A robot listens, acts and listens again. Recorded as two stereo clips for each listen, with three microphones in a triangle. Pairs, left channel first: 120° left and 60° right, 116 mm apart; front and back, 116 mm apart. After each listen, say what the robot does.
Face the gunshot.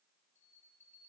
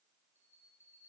Keep listening.
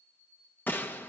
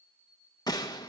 Turn 50° left.
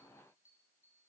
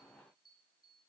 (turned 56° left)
Facing where the gunshot came from. I can't hear it now.